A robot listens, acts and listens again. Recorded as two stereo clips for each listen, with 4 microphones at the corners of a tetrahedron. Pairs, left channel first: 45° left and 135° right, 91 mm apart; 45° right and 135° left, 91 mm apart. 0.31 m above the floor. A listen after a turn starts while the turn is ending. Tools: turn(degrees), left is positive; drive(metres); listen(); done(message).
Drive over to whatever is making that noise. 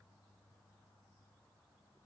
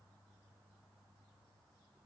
listen()
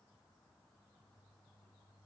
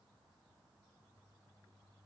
listen()
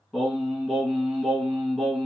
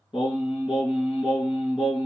turn(degrees=-50)
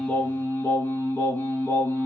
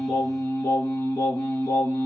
drive(metres=1.0)
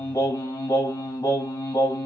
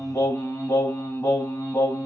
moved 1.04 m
drive(metres=1.0)
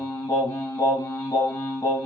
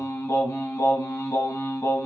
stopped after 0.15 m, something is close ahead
done("Arrived at the singing, straight ahead.")